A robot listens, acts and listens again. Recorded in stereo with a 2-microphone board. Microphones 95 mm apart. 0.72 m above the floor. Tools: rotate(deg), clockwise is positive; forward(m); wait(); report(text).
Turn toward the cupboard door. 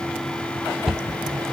rotate(30)
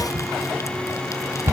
rotate(150)
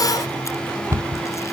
rotate(35)
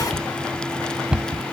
rotate(10)
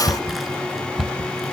report("Found it: a cupboard door, straight ahead.")